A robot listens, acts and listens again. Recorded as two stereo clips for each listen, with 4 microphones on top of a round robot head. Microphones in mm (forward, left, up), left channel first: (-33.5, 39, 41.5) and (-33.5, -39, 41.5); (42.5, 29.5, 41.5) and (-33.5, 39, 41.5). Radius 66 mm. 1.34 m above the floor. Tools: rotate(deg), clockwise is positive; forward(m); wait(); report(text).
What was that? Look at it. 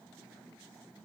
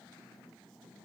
wait()
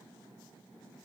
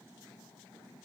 wait()
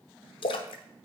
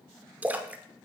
rotate(-100)
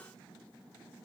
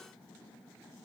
report("Facing where the splash came from. I can't hear it now.")